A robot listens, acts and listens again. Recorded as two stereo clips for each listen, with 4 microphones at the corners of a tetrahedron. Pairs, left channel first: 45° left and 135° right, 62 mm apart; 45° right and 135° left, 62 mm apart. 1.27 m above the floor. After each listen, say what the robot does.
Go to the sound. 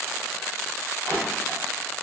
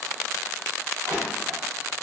Turn 135° left.
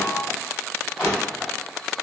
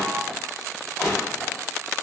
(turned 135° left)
Turn 25° right.
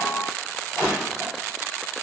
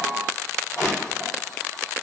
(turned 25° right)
Drive 1.0 m forward.
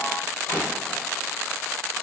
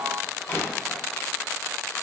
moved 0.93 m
Drive 1.0 m forward.
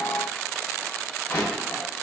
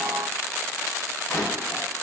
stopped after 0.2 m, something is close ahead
I am next to the crushing.